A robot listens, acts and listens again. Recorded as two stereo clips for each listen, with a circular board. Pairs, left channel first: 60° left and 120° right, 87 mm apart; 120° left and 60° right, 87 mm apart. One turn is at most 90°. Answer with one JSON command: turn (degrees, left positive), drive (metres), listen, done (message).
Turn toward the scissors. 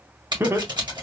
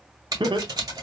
{"turn": -90}
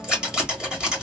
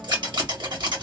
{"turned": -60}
{"turn": -40}
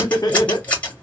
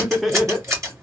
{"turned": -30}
{"turn": -10}
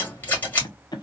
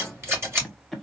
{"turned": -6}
{"done": "Facing the scissors, 1 to 2 m away."}